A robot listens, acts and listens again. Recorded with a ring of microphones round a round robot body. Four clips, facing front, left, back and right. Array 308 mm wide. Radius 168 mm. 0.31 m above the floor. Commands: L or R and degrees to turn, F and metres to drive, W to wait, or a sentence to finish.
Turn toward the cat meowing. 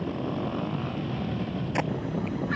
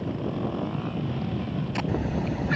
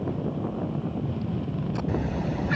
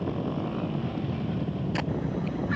L135
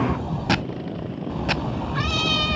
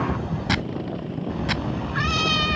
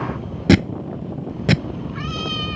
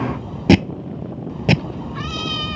L20
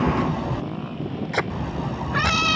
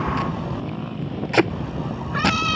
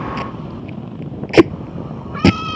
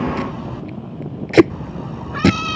Found it: a cat meowing, straight ahead.